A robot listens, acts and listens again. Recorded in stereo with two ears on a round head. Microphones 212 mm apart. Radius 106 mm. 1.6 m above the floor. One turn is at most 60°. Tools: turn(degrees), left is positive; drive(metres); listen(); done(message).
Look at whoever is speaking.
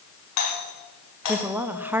turn(degrees=-30)
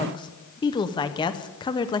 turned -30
turn(degrees=20)
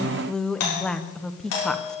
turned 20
done("Found it: a woman speaking, straight ahead, under 1 m away.")